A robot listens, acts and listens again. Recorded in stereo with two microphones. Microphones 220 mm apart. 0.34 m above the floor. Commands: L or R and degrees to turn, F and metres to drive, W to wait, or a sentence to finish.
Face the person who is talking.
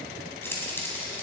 W
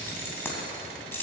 W
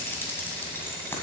I can't make out anyone speaking, only keys jangling.